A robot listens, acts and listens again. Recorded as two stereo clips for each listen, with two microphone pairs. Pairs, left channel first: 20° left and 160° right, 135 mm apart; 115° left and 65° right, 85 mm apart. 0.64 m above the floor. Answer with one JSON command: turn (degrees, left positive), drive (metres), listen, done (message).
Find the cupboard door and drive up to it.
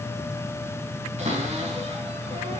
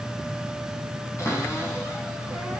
{"turn": 170}
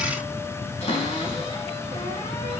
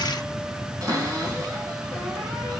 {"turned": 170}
{"turn": -20}
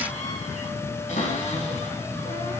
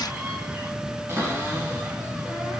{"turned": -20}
{"drive": 1.0}
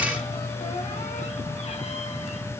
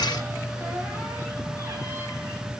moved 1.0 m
{"listen": true}
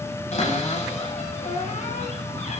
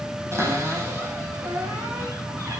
{"turn": -10}
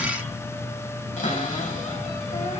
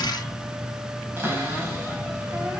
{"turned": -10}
{"drive": 1.0}
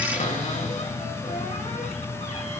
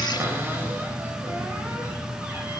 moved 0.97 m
{"drive": 1.0}
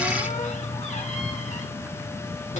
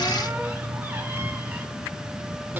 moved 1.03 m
{"listen": true}
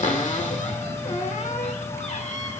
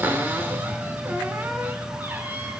{"drive": 1.0}
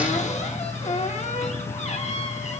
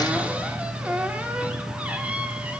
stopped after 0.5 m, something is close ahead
{"done": "I am next to the cupboard door."}